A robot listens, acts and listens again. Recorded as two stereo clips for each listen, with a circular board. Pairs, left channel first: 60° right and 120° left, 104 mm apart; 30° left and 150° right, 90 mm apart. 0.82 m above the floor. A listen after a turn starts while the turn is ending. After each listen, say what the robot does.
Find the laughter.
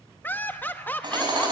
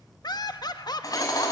Found it: laughter, straight ahead.